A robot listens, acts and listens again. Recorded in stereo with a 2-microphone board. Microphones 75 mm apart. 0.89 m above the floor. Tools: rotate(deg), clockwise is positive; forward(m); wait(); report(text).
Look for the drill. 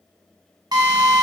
rotate(60)
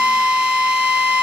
rotate(15)
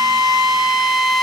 report("Found it: a drill, straight ahead, 1 to 2 m away.")